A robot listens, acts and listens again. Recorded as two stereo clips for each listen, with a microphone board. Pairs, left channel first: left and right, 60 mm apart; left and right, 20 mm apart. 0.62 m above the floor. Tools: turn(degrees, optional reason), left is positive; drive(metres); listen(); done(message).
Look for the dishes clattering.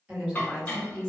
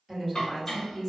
turn(degrees=30, reason="The dishes clattering: about 30° left or 150° left.")
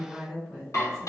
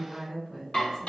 turn(degrees=120, reason="So it is at 120° left.")
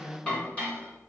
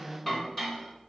turn(degrees=20, reason="The dishes clattering is now 20° left.")
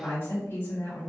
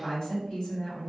listen()
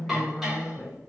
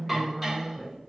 done("Found it: dishes clattering, straight ahead, under 1 m away.")